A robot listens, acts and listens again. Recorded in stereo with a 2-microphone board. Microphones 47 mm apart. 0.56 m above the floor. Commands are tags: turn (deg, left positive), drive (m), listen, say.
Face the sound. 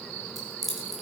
<turn deg="30"/>
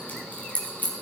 <turn deg="140"/>
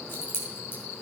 <turn deg="55"/>
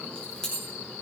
<turn deg="15"/>
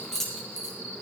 <say>Found it: keys jangling, straight ahead.</say>